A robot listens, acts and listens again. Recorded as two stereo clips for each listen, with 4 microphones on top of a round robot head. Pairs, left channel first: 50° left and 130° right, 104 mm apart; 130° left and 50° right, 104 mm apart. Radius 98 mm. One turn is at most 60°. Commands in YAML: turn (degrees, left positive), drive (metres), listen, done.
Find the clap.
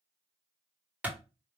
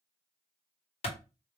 turn: 60
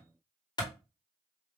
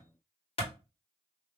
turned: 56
turn: 60
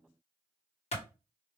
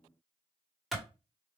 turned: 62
turn: 35
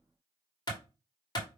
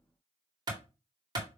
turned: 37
done: "Found it: a clap, straight ahead."